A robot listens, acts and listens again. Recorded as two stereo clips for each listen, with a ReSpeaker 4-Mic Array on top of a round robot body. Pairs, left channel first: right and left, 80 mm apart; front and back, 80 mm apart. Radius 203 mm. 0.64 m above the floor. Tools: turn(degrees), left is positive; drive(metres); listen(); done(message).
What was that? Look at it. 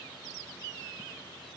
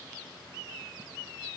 listen()
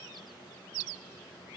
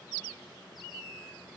listen()
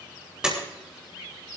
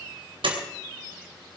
turn(degrees=170)
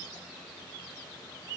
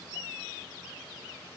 done("I heard a door slam from this way, but can't make it out now.")